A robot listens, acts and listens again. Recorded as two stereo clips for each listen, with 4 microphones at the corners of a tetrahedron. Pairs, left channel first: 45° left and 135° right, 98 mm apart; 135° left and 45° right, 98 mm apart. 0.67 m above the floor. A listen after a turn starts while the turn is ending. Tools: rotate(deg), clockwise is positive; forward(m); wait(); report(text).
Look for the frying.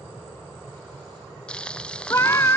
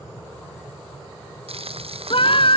rotate(35)
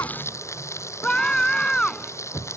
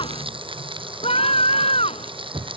rotate(15)
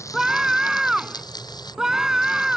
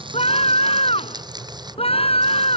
report("Facing the frying.")